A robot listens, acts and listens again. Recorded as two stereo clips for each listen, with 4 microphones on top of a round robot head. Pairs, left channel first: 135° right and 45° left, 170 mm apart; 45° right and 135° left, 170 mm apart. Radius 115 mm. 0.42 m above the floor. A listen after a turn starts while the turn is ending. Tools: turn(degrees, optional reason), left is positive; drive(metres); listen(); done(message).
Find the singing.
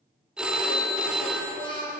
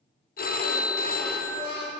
turn(degrees=-70, reason="The singing: 70° right.")
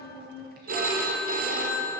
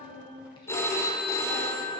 turn(degrees=15, reason="The singing is now 15° left.")
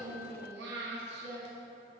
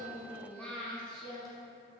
turn(degrees=45, reason="The singing is now 45° left.")
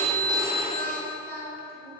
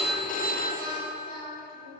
turn(degrees=10, reason="The singing is now 10° left.")
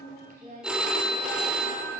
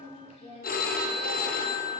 done("Facing the singing, 1 to 2 m away.")